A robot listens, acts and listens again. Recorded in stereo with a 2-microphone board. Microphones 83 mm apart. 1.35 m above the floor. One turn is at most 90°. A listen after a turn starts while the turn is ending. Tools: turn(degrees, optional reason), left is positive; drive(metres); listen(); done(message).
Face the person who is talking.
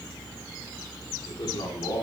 turn(degrees=60, reason="The man speaking: about 60° left or 120° left.")
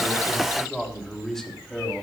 done("Facing the man speaking, 2 to 4 m away.")